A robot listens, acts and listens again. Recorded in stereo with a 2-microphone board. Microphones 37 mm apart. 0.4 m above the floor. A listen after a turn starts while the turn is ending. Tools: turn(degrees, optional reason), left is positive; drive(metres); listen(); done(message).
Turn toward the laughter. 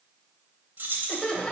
turn(degrees=25, reason="The laughter: about 25° left or 155° left.")
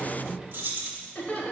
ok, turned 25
turn(degrees=125, reason="So it is at 125° left.")
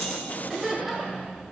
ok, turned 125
turn(degrees=-10, reason="The laughter is now 10° right.")
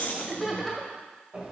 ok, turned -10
done("Facing the laughter, 1 to 2 m away.")